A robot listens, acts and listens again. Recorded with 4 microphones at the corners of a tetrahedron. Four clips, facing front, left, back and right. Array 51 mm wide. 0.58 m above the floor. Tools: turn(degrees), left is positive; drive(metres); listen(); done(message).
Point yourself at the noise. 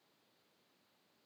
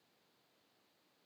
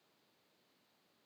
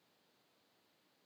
listen()
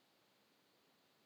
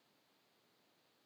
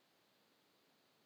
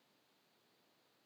listen()
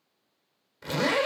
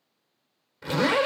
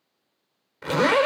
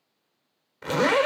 turn(degrees=-150)
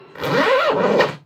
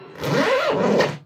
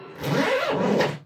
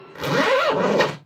done("Found it: a zipper, straight ahead, 2 to 4 m away.")